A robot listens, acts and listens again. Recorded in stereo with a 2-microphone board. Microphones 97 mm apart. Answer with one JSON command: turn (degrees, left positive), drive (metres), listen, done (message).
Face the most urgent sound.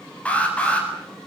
{"turn": 30}
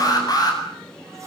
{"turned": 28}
{"turn": 140}
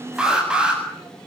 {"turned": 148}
{"turn": -10}
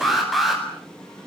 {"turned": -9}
{"done": "Facing the alarm, over 4 m away."}